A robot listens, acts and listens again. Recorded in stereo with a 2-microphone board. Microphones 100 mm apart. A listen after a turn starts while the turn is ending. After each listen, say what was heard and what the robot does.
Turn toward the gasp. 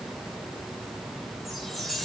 Keep listening.
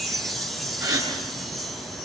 The gasp: about 40° right or 140° right. Turn 40° right.
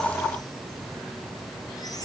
Keep listening.
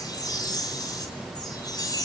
I heard a gasp, but can't make it out now. It was about straight ahead or 100° right.